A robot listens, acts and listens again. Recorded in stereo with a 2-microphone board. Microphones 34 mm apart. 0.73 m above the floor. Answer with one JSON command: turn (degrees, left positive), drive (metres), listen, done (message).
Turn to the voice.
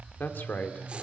{"turn": 65}
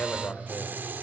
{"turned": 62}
{"turn": 60}
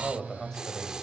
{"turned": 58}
{"turn": 15}
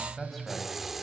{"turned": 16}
{"done": "Facing the man speaking."}